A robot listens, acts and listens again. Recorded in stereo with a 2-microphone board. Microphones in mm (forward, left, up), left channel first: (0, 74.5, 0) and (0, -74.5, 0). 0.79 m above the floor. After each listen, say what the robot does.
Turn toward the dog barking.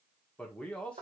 Keep listening.
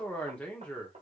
Keep listening.
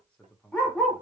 Turn 30° left.
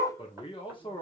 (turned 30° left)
Turn 165° left.
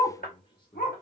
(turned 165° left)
Turn 80° left.
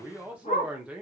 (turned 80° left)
Turn 50° left.
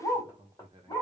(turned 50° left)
Turn 25° left.
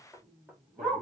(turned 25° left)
Facing the dog barking.